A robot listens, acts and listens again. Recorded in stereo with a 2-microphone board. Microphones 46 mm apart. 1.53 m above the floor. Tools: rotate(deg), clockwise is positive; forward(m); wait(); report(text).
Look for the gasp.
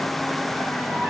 wait()
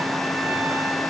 wait()
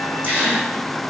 rotate(55)
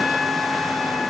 wait()
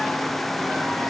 report("I heard a gasp, but can't make it out now. It was about straight ahead or 70° right.")